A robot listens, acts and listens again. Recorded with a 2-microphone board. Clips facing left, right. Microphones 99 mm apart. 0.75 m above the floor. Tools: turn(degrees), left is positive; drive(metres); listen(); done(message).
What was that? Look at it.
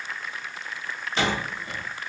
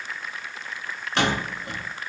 turn(degrees=-75)
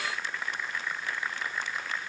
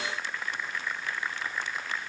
listen()
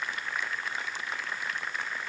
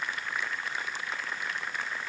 done("I heard a door slam, but can't make it out now. It was about straight ahead or 30° right.")